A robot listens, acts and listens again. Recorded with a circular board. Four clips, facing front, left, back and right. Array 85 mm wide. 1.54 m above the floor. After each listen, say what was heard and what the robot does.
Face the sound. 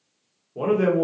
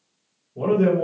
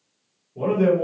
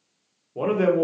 The man speaking: 60° right. Turn 60° right.
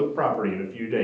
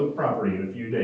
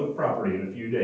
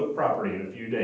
The man speaking is now 20° right. Turn 20° right.
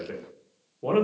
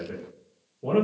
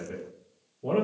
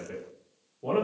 Facing the man speaking.